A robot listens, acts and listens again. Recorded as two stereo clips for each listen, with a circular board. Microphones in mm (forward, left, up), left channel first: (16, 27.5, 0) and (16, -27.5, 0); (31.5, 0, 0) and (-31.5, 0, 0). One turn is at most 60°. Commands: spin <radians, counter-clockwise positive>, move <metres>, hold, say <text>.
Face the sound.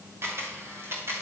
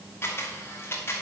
spin -0.96
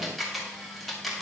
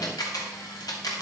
say Facing the camera shutter, 2 to 4 m away.